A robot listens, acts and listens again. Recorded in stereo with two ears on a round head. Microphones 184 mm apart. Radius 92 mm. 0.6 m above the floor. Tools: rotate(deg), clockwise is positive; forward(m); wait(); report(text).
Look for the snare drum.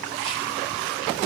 wait()
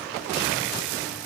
wait()
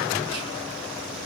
report("I can't make out a snare drum to turn to.")